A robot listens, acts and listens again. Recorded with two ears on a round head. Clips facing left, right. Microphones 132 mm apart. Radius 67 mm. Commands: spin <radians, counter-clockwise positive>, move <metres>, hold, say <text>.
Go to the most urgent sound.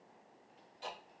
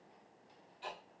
hold
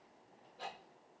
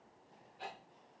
hold
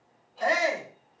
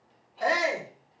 spin 0.52
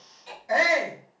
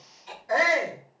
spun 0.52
spin 2.71
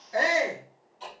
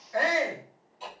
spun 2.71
spin 0.79
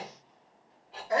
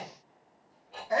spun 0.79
move 1.0
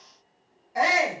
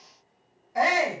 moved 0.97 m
move 1.0
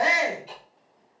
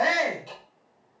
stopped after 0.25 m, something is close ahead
say I am next to the shout.